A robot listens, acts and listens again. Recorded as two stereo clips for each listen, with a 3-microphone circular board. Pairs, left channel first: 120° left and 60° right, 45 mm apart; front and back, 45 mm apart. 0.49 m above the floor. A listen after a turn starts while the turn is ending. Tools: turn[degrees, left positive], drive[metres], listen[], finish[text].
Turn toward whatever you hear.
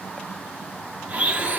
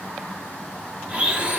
Thought: The blender: 115° right.
Action: turn[-115]
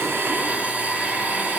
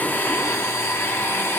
Action: finish[Found it: a blender, straight ahead, 1 to 2 m away.]